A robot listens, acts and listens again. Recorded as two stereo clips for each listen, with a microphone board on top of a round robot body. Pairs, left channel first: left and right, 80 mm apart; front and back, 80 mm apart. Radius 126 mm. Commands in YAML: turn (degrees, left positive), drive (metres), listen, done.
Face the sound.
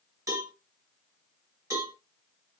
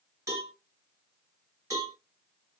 turn: -135
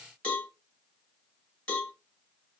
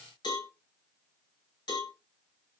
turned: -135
turn: 15
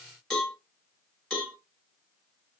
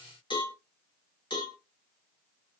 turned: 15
done: "Found it: a cowbell, straight ahead, 1 to 2 m away."